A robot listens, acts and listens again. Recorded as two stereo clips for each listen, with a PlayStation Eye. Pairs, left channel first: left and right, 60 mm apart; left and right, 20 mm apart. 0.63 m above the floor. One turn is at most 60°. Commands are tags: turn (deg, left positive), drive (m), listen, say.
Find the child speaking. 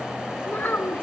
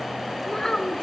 <turn deg="35"/>
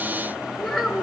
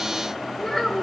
<say>Facing the child speaking.</say>